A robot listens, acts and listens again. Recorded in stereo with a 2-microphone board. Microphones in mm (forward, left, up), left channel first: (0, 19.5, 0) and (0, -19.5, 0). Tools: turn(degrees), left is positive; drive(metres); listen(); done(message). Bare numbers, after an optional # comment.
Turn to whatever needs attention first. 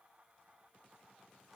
listen()
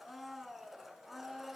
listen()
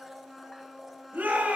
# The shout: about 50° right or 130° right.
turn(-50)
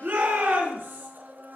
# So it is at 80° right.
turn(-80)
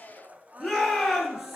done("Facing the shout, over 4 m away.")